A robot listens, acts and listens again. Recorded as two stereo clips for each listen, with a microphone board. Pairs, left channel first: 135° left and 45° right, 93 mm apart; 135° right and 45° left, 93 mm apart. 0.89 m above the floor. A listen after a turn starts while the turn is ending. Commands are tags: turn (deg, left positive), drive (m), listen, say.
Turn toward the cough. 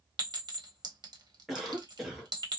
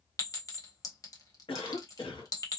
<turn deg="-135"/>
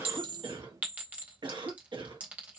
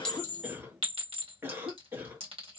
<turn deg="-20"/>
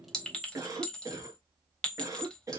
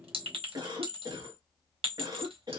<say>Found it: a cough, straight ahead, 1 to 2 m away.</say>